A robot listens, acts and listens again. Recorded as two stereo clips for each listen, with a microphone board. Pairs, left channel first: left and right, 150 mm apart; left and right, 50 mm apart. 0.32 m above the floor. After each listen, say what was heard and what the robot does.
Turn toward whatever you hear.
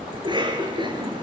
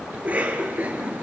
The cough: about 30° right or 150° right. Turn 30° right.
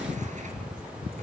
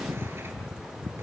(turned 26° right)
Keep listening.
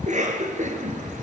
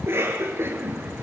So it is at 125° right. Turn 125° right.
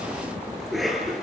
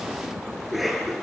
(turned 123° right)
Facing the cough.